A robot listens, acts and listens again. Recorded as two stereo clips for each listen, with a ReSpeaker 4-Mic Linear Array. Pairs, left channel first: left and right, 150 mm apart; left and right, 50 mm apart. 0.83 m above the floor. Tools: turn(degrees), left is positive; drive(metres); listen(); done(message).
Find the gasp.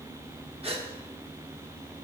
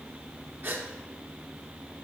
turn(degrees=-40)
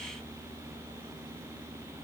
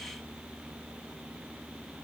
listen()
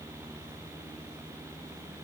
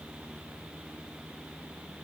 done("I heard a gasp, but can't make it out now. It was about straight ahead or 100° right.")